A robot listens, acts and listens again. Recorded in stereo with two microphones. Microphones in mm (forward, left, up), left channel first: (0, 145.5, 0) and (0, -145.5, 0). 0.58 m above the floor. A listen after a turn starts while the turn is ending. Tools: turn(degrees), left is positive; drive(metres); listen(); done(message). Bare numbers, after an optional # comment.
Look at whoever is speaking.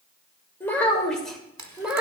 turn(-30)
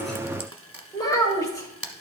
# So it is at 10° left.
turn(10)
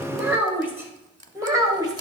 # The child speaking is now 15° right.
turn(-15)
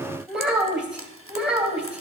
done("Facing the child speaking.")